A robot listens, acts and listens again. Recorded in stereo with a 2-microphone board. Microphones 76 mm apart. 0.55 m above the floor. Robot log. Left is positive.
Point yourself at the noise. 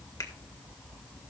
cmd idle
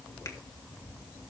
cmd idle
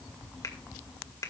note: The finger snap: about 45° left or 135° left.
cmd yaw +45
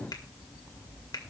note: So it is at 80° left.
cmd yaw +80
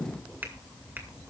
cmd idle
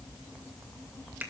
note: The finger snap is now 30° right.
cmd yaw -30
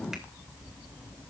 cmd idle
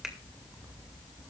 cmd idle
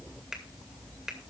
note: The finger snap is now 10° right.
cmd yaw -10
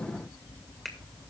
end: Found it: a finger snap, straight ahead.